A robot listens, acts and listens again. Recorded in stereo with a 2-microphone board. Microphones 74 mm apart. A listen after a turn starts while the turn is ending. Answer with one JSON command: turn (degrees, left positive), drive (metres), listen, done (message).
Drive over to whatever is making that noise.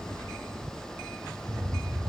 {"turn": -20}
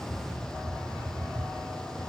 {"turn": -145}
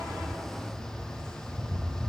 {"turn": 10}
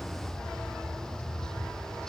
{"drive": 1.0}
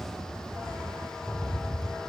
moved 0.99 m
{"turn": 15}
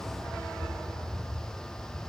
{"drive": 1.0}
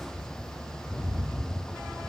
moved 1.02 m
{"turn": 10}
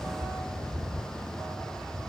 {"drive": 1.0}
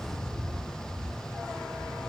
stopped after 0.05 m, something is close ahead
{"done": "I am next to the rattle."}